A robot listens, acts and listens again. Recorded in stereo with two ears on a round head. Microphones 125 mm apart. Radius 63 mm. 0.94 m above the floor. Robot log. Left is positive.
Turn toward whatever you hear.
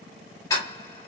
note: The ticking: about 20° left or 160° left.
cmd yaw +20
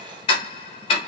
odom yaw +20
note: So it is at 140° left.
cmd yaw +140
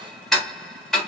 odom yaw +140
end: Found it: ticking, straight ahead.